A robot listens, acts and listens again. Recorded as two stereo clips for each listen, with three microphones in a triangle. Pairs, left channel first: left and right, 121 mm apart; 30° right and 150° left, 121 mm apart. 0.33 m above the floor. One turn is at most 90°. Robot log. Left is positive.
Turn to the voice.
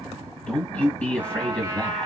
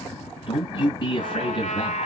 note: The man speaking: 10° left.
cmd yaw +10
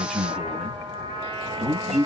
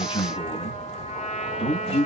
end: Found it: a man speaking, straight ahead.